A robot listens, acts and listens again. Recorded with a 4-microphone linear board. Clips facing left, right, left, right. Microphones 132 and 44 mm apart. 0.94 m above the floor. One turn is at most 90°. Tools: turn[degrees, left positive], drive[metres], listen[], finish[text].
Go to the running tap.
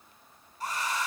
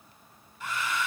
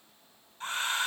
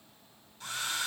Action: listen[]
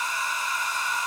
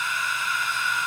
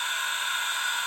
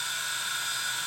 Action: listen[]
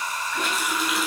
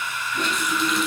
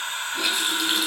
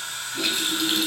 Action: turn[30]
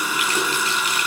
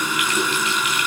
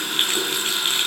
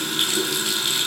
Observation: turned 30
Thought: So it is at 145° left.
Action: turn[90]
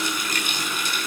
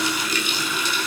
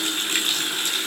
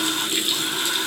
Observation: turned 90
Thought: The running tap is now 50° left.
Action: turn[50]
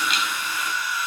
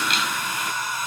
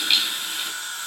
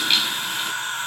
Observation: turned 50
Action: drive[1.0]
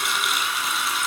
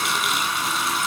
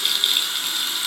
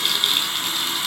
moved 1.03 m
Action: drive[1.0]
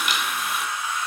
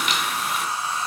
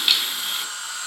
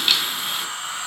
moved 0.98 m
Action: drive[1.0]
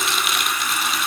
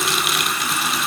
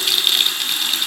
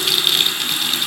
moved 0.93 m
Action: drive[1.0]
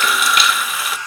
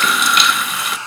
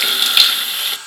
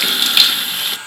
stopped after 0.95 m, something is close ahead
Action: finish[Arrived at the running tap, straight ahead.]